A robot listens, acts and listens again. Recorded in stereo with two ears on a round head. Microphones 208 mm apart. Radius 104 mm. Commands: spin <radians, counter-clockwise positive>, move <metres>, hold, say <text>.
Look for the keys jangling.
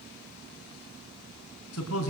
hold
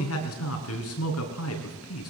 hold
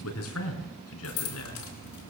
spin 1.57
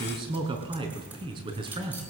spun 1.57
hold
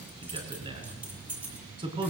say Found it: keys jangling, straight ahead.